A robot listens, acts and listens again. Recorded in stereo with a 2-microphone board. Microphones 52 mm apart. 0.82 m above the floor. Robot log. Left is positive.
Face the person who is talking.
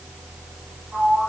cmd idle
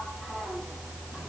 cmd idle
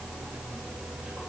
end: I can't make out anyone speaking to turn to.